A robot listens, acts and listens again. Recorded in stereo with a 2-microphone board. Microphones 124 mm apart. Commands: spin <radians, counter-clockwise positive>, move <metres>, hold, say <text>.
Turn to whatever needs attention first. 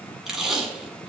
hold
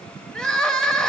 spin 0.52
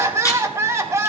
spin -0.44
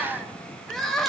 say Facing the crying, 1 to 2 m away.